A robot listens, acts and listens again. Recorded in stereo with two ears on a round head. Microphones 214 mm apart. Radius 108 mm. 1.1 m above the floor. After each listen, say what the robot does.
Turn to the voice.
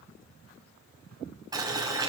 Keep listening.
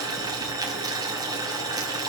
Keep listening.
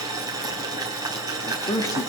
Turn 15° left.
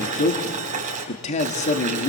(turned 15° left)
Turn 150° left.
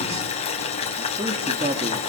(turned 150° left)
Turn 30° right.
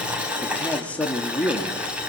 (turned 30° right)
Facing the man speaking, 2 to 4 m away.